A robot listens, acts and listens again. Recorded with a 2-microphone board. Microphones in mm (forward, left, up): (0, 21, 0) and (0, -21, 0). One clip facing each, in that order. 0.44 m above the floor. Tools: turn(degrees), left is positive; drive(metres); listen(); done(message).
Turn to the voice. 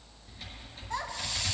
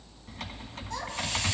turn(degrees=20)
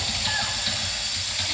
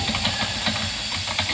listen()
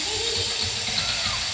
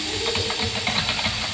listen()
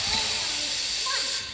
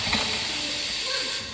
done("I heard a child speaking, but can't make it out now. It was about straight ahead or 140° left.")